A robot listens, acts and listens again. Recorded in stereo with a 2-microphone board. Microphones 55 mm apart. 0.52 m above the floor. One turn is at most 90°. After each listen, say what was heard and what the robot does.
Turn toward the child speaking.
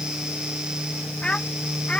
The child speaking: about 25° left or 155° left. Turn 25° left.
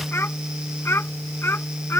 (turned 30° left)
So it is at 125° left. Turn 90° left.
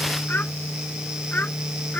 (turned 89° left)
The child speaking is now 35° left. Turn 35° left.
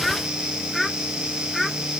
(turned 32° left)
Found it: a child speaking, straight ahead.